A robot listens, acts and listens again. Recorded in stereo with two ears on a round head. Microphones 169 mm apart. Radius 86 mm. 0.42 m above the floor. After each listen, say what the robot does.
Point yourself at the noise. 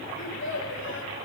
Turn 90° left.
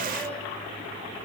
Keep listening.
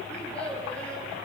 Facing the child speaking, over 4 m away.